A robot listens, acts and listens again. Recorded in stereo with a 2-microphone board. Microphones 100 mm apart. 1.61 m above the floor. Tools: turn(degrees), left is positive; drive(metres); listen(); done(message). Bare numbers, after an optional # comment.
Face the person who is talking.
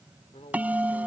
turn(90)
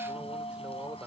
listen()
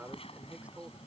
# The man speaking is now 15° right.
turn(-15)
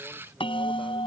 listen()
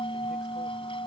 listen()
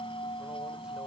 done("I heard a man speaking from this way, but can't make it out now.")